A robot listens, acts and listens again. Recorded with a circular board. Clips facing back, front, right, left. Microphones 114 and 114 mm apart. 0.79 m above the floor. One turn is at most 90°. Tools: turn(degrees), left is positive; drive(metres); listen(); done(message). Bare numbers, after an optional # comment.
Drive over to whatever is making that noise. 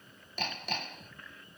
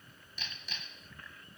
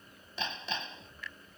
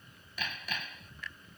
# The hammering: 155° right.
turn(-90)
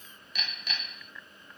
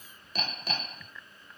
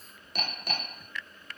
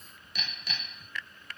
# The hammering is now 50° right.
turn(-50)
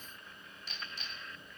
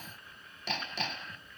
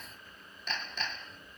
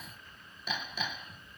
# The hammering is now 10° left.
turn(10)
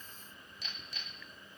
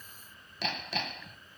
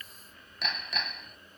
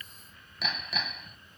drive(1.0)
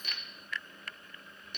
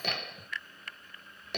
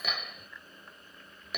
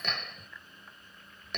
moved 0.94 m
drive(1.0)
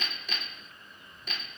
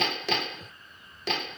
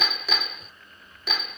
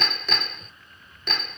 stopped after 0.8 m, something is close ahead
done("I am next to the hammering.")